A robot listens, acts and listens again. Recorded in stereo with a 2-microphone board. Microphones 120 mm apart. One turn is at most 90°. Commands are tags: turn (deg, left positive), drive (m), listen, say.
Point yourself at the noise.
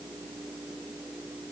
<listen/>
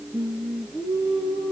<turn deg="30"/>
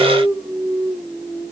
<turn deg="90"/>
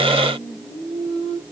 <turn deg="70"/>
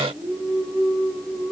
<turn deg="-10"/>
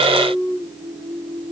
<say>Found it: singing, straight ahead, over 4 m away.</say>